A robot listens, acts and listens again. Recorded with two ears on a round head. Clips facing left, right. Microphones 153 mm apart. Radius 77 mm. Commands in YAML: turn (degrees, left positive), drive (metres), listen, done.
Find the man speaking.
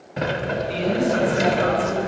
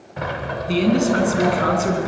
turn: -55
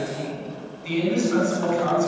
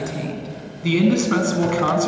turn: -75
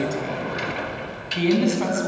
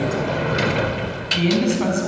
done: "Facing the man speaking, over 4 m away."